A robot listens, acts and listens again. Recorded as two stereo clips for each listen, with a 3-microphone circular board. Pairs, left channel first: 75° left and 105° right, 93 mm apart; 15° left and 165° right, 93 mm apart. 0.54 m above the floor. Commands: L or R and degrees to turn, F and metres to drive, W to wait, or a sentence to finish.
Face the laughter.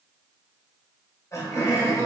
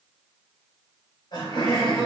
L25
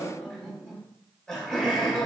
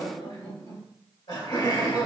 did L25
Found it: laughter, straight ahead.